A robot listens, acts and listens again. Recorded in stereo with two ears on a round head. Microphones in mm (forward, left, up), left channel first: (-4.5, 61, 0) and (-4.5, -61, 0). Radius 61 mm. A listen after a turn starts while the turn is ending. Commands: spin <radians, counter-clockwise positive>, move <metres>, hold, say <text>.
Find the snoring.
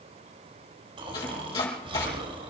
spin -0.70
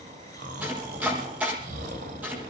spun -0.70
spin -1.66
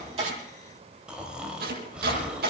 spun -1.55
spin -0.17
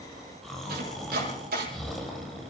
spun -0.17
say Facing the snoring, 2 to 4 m away.